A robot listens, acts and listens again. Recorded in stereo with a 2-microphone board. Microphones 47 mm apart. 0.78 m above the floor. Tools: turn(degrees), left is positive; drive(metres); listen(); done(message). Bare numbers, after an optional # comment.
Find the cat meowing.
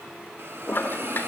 listen()
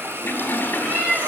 # The cat meowing: about 40° right or 140° right.
turn(-40)
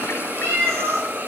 # So it is at 105° right.
turn(-105)
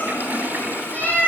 # The cat meowing is now 45° left.
turn(45)
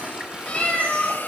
# The cat meowing is now 30° left.
turn(30)
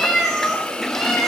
done("Facing the cat meowing.")